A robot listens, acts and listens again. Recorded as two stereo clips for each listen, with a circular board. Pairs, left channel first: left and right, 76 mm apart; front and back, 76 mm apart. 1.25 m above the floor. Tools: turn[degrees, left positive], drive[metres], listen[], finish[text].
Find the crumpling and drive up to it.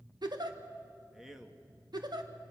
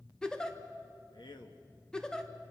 Action: listen[]
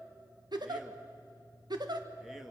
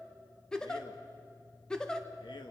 Action: listen[]
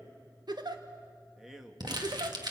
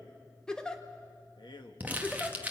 Thought: The crumpling: 110° right.
Action: turn[-110]
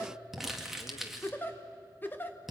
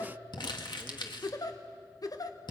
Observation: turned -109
Action: drive[1.0]
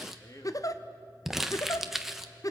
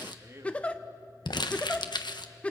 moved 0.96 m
Action: drive[1.0]
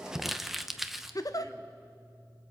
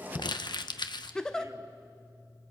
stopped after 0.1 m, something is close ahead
Action: finish[I am next to the crumpling.]